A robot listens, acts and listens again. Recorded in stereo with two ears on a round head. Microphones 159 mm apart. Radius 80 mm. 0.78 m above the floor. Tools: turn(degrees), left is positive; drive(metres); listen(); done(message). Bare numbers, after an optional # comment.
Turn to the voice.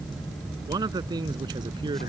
# The man speaking: about 25° right or 155° right.
turn(-25)
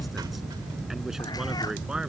done("Found it: a man speaking, straight ahead.")